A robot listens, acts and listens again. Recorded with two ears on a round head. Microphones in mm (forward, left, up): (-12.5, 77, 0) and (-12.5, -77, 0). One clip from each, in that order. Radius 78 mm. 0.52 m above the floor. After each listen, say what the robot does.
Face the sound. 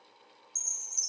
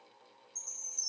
Turn 75° left.
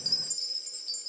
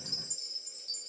Turn 30° left.
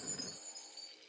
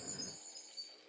Found it: a chime, straight ahead, 2 to 4 m away.